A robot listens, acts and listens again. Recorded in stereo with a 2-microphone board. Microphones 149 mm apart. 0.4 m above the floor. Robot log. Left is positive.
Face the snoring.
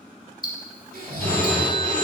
cmd yaw -90
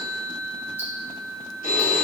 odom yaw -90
cmd idle
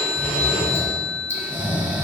note: The snoring is now 10° right.
cmd yaw -10
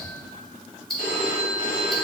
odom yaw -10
cmd idle
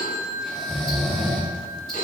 end: Facing the snoring.